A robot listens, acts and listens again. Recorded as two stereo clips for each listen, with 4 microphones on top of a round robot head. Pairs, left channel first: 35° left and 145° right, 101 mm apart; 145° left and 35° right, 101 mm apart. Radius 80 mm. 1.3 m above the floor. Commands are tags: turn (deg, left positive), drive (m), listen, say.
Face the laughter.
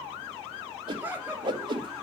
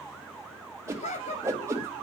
<turn deg="145"/>
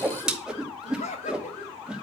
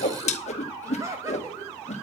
<turn deg="25"/>
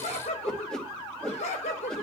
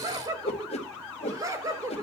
<turn deg="25"/>
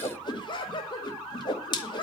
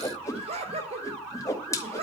<turn deg="-10"/>
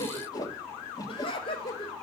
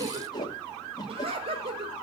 <say>Facing the laughter, over 4 m away.</say>